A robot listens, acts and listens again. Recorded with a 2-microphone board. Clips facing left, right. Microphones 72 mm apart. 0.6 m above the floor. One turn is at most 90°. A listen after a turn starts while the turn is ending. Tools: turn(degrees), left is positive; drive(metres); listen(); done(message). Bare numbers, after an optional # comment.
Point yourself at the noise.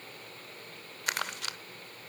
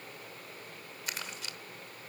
# The crumpling: about 65° left or 115° left.
turn(65)
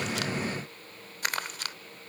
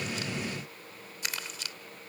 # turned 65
# So it is at 50° left.
turn(50)
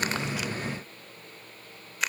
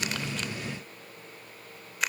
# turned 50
done("Facing the crumpling, 1 to 2 m away.")